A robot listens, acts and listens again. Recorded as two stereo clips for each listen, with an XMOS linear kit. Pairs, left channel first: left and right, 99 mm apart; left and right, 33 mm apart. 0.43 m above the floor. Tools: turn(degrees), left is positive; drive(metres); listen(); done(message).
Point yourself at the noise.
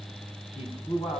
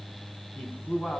turn(degrees=65)
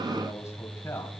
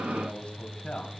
listen()
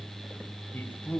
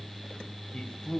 turn(degrees=15)
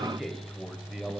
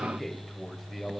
turn(degrees=-10)
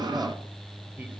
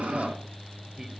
listen()
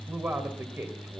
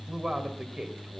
turn(degrees=-25)
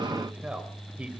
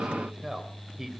turn(degrees=-10)
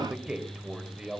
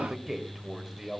done("Facing the man speaking.")